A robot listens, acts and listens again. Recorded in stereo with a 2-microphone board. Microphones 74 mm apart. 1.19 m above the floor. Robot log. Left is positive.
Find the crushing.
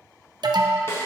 cmd idle
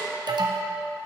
cmd idle
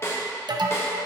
end: I can't make out crushing, only an alarm and a snare drum.